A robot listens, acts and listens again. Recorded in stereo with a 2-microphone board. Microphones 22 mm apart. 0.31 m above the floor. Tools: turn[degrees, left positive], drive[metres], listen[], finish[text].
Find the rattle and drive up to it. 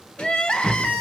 Thought: The rattle: about 70° left or 110° left.
Action: turn[70]
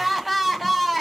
Action: listen[]
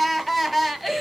Action: listen[]
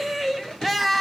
Action: finish[I heard a rattle, but can't make it out now. It was about straight ahead or 40° left. I did not reach it.]